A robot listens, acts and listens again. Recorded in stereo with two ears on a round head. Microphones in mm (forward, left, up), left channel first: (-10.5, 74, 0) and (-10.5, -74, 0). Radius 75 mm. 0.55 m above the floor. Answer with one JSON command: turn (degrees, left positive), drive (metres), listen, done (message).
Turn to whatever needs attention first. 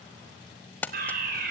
{"turn": -60}
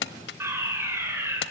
{"turn": -15}
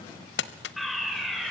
{"done": "Found it: a fire alarm, straight ahead."}